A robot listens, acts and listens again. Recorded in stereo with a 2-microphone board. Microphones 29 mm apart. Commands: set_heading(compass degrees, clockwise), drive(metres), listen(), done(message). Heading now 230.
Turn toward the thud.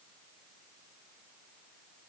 listen()
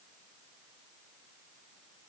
listen()
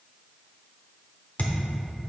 set_heading(170)
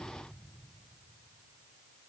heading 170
listen()
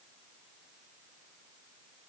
done("I heard a thud, but can't make it out now. It was about straight ahead or 60° left.")